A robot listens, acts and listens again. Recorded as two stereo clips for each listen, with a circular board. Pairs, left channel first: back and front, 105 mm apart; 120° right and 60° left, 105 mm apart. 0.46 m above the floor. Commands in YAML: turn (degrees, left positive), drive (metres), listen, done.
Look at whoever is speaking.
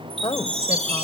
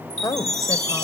turn: -170
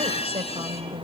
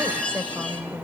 turn: -10
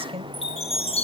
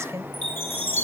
done: "Found it: a woman speaking, straight ahead, 1 to 2 m away."